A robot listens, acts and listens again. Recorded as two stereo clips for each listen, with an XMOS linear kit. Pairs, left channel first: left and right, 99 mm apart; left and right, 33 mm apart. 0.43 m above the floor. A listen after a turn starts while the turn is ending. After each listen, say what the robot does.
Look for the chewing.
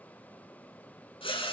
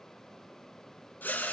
Keep listening.
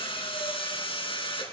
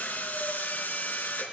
Keep listening.
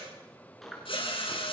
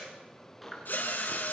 Turn 30° left.
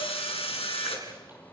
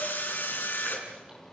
Keep listening.
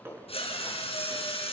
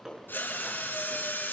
Turn 25° right.
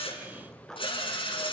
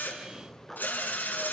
Facing the chewing.